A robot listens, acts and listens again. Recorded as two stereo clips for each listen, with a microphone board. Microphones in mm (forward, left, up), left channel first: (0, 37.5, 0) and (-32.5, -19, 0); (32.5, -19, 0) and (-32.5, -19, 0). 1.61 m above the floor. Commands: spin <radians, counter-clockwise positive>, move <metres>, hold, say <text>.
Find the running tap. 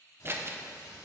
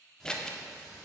spin 1.48
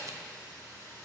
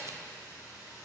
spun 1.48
spin 0.26
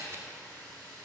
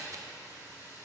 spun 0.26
hold
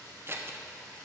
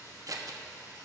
say Facing the running tap.